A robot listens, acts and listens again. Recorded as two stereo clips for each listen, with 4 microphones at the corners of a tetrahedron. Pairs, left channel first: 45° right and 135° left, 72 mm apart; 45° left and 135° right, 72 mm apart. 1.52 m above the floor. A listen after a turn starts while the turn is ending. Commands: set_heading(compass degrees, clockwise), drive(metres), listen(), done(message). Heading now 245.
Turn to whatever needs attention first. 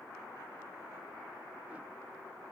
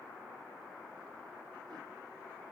listen()
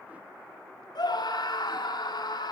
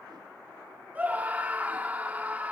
set_heading(310)
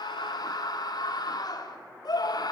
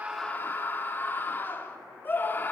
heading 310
set_heading(325)
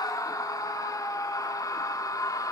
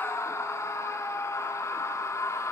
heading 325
done("Facing the scream.")